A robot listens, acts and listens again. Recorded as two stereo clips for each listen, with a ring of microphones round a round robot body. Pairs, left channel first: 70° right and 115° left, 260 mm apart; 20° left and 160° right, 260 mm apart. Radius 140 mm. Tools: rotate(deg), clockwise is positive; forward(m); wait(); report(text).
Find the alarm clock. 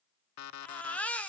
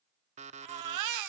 rotate(95)
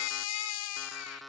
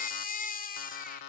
rotate(-25)
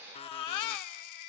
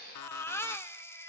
report("Facing the alarm clock.")